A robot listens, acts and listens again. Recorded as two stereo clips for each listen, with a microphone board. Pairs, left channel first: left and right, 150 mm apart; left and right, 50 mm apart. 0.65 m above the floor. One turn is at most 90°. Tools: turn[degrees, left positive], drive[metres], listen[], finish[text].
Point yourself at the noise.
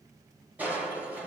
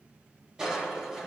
Action: turn[-30]
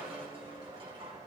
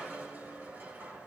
Thought: So it is at 140° right.
Action: turn[-90]
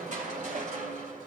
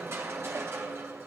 Thought: The crushing is now 60° right.
Action: turn[-60]
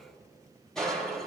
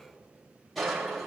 Action: finish[Facing the crushing.]